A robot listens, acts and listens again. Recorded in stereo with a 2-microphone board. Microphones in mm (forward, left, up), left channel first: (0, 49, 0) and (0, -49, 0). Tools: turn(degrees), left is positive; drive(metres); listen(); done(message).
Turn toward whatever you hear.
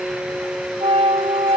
turn(degrees=-90)
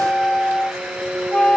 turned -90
turn(degrees=10)
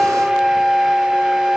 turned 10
done("Facing the flute.")